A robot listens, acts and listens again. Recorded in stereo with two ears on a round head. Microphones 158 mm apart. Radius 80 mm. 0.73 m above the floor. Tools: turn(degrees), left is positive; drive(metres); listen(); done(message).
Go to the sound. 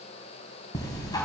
turn(degrees=25)
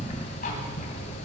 turn(degrees=130)
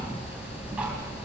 drive(metres=1.0)
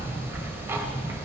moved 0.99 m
turn(degrees=-15)
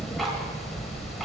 drive(metres=1.0)
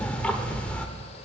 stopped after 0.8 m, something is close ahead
done("Arrived at the ticking, straight ahead.")